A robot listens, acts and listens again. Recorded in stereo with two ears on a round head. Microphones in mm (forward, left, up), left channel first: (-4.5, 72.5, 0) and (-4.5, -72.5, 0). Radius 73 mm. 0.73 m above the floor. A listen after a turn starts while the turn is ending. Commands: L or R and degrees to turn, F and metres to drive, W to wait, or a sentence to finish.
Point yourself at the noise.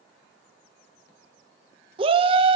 R35
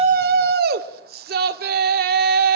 R110
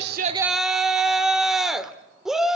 Facing the shout.